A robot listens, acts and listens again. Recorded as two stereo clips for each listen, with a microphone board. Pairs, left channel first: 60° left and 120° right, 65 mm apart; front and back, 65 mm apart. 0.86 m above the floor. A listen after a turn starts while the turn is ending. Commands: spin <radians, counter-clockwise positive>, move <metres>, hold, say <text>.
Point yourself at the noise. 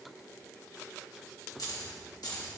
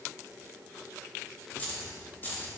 spin 1.05
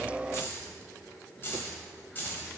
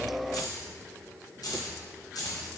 say Facing the keys jangling, 2 to 4 m away.